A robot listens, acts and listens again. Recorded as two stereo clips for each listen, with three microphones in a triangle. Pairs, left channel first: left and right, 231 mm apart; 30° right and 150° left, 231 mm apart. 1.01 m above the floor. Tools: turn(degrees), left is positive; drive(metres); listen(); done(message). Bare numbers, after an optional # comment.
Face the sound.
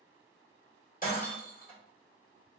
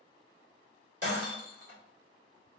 # The breaking glass: 140° left.
turn(140)
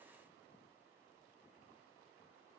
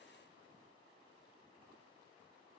done("I heard breaking glass from this way, but can't make it out now.")